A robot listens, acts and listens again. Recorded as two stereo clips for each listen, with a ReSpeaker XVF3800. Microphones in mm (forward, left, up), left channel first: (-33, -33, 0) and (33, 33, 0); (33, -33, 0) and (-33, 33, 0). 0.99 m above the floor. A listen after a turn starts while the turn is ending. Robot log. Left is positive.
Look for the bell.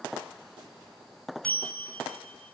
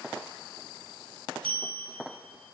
note: The bell: 145° left.
cmd yaw +145
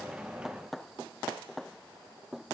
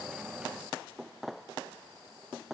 cmd idle
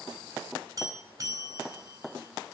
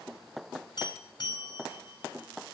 note: The bell is now 10° right.
cmd yaw -10
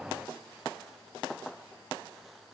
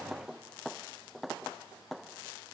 cmd idle
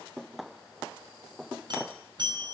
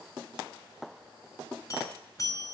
end: Facing the bell.